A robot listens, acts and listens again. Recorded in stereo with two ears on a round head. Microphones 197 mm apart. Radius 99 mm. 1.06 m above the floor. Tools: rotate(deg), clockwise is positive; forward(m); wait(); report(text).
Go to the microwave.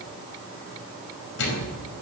rotate(-65)
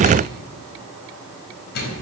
rotate(-50)
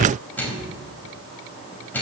rotate(-10)
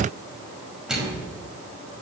forward(1.0)
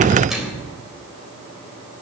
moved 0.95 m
forward(1.0)
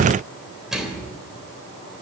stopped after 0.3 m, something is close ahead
report("Something is in my way. I am facing the microwave but have not reached it.")